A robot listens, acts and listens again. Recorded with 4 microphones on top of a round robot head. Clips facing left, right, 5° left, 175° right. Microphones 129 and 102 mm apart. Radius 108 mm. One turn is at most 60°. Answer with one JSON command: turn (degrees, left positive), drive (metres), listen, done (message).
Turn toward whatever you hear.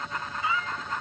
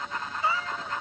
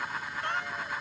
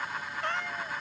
{"turn": -60}
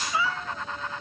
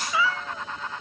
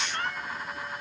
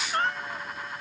{"turn": -60}
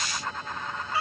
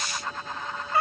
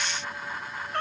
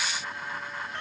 {"turn": -50}
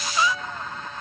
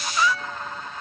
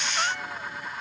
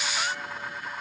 {"turn": 20}
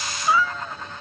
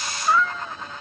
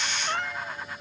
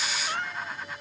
{"done": "Found it: a cat meowing, straight ahead."}